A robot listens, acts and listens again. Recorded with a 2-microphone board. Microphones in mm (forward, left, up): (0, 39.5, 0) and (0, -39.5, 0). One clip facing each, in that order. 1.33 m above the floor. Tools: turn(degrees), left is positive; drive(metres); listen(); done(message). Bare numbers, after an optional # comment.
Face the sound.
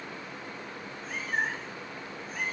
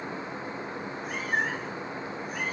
# The cat meowing: about 65° right or 115° right.
turn(-65)
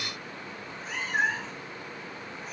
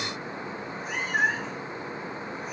done("Facing the cat meowing.")